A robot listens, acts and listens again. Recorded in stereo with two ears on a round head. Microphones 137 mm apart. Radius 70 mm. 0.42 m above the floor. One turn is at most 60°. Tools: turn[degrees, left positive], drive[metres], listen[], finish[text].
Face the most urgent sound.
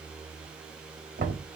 Action: listen[]
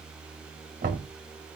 Action: listen[]
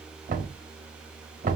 Action: finish[I can't make out anything urgent, only knocking.]